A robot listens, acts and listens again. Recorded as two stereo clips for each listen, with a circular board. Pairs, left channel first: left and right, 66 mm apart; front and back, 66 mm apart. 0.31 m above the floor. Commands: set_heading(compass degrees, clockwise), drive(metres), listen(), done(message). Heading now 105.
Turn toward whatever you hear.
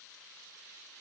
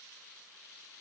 listen()
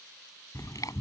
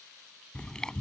set_heading(25)
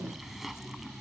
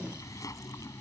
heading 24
done("Facing the chewing.")